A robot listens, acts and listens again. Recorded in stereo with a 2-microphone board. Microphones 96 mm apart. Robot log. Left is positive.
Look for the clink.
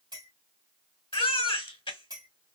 note: The clink: about 50° right or 130° right.
cmd yaw -50
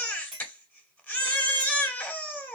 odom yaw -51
end: Facing the clink, 1 to 2 m away.